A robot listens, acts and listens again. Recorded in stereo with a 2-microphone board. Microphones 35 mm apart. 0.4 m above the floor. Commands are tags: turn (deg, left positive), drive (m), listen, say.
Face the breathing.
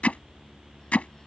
<listen/>
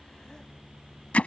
<listen/>
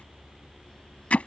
<say>I can't make out breathing, only hammering.</say>